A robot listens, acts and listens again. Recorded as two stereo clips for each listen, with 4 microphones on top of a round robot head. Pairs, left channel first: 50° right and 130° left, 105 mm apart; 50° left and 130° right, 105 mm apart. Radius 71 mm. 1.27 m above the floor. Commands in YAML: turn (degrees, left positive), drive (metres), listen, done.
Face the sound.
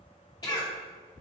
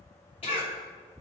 turn: 10
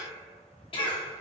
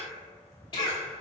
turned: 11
done: "Facing the cough, 2 to 4 m away."